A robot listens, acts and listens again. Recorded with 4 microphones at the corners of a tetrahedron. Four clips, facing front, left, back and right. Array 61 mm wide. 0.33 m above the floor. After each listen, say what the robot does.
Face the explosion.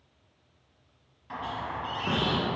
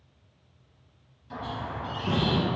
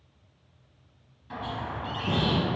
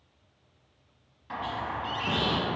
Turn 15° right.
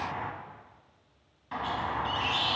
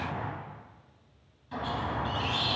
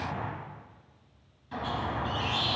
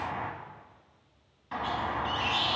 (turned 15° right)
Facing where the explosion came from. I can't hear it now.